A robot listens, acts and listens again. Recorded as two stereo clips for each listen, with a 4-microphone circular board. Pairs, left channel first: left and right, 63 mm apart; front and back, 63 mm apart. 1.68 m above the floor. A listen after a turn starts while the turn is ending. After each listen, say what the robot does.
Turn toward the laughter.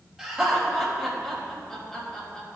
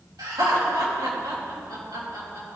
Turn 170° left.
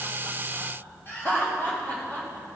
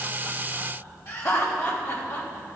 Turn 30° left.
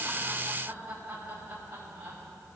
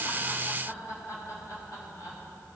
Turn 30° right.
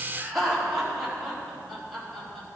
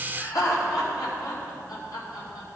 Found it: laughter, straight ahead, over 4 m away.